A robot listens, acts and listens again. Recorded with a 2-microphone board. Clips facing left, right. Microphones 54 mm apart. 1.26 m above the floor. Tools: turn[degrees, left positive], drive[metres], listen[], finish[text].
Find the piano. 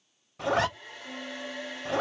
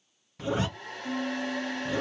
Action: turn[-30]
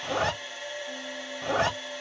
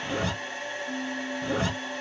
Thought: So it is at 25° left.
Action: turn[25]
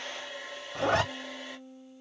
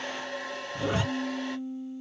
Action: finish[Found it: a piano, straight ahead, 1 to 2 m away.]